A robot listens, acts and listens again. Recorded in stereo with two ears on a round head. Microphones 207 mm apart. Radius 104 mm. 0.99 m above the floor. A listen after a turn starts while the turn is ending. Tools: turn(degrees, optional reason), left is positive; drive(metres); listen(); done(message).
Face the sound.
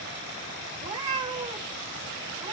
turn(degrees=-20, reason="The cat meowing: about 20° right or 160° right.")
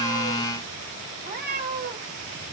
turn(degrees=-135, reason="So it is at 135° right.")
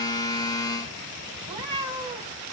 turn(degrees=-20, reason="The cat meowing is now 20° right.")
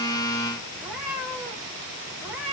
done("Found it: a cat meowing, straight ahead, 2 to 4 m away.")